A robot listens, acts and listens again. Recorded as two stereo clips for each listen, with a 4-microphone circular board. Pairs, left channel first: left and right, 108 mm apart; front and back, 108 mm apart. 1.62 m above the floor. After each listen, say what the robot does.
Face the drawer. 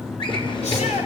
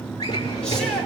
Turn 50° left.
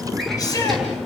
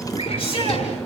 Found it: a drawer, straight ahead, over 4 m away.